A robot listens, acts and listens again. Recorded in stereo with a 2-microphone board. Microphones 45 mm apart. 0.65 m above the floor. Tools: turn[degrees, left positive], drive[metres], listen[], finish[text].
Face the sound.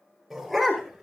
Action: turn[30]
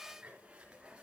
Action: listen[]
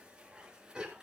Thought: So it is at 20° right.
Action: turn[-20]
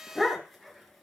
Action: finish[Found it: a dog barking, straight ahead.]